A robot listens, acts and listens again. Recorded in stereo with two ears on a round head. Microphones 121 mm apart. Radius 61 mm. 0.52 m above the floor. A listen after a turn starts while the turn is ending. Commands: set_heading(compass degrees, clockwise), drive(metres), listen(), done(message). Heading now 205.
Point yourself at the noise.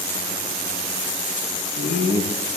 set_heading(155)
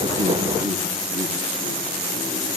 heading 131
listen()
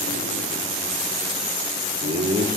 set_heading(181)
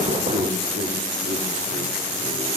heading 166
set_heading(181)
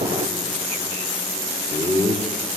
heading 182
done("Facing the laughter.")